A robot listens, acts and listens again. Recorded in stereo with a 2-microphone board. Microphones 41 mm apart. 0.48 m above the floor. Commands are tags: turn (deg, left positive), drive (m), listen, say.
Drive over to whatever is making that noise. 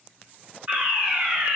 <turn deg="-30"/>
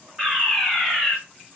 <drive m="1.0"/>
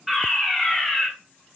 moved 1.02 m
<turn deg="-10"/>
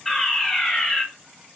<drive m="1.0"/>
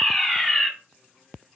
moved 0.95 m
<drive m="1.0"/>
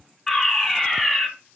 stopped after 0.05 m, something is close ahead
<say>Arrived at the fire alarm, straight ahead.</say>